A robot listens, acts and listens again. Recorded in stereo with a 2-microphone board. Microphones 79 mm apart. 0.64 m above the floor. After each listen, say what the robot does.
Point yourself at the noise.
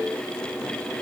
Keep listening.
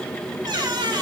Turn 60° right.
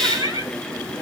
Turn 60° right.
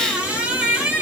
Turn 15° right.
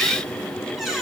Facing the squeak.